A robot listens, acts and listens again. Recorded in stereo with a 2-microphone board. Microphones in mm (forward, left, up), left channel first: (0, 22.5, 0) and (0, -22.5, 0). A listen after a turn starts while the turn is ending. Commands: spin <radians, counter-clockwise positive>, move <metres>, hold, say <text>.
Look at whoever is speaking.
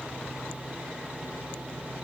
hold
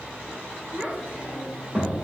spin -0.44
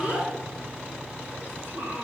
spin -2.27
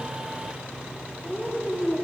say Facing the child speaking, 2 to 4 m away.